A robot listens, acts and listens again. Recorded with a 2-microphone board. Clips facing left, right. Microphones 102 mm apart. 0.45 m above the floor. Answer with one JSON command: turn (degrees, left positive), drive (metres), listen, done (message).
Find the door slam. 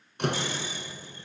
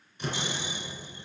{"turn": 70}
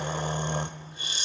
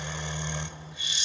{"listen": true}
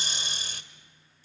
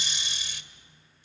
{"done": "I heard a door slam, but can't make it out now. It was about straight ahead or 40° left."}